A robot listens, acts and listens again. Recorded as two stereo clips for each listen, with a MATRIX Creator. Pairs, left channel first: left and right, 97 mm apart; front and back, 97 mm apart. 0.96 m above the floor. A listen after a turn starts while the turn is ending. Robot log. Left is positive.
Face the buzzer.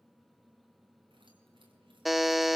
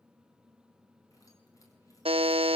note: The buzzer: straight behind.
cmd yaw +180
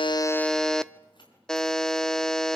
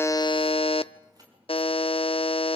end: Found it: a buzzer, straight ahead.